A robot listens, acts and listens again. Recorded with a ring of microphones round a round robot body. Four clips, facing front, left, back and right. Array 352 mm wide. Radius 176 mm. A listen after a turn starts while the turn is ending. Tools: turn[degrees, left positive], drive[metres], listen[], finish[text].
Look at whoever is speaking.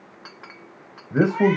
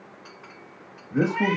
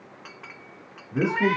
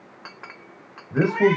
Thought: The man speaking: 15° right.
Action: turn[-15]
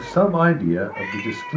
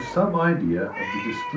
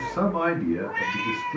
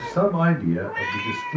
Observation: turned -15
Action: finish[Found it: a man speaking, straight ahead, 2 to 4 m away.]